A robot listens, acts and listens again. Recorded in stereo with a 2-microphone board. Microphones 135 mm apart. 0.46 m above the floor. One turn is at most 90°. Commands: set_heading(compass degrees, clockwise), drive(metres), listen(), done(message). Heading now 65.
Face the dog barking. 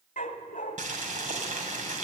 set_heading(335)
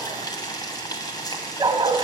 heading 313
set_heading(348)
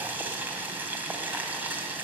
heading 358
set_heading(348)
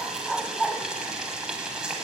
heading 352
done("Facing the dog barking.")